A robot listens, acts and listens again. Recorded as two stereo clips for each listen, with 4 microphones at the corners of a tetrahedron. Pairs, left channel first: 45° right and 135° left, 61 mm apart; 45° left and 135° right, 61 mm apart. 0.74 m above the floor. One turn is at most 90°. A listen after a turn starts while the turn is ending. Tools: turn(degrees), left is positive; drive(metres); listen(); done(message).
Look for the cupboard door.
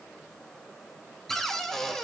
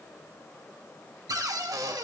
turn(degrees=-90)
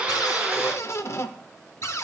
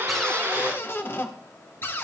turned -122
done("Facing the cupboard door.")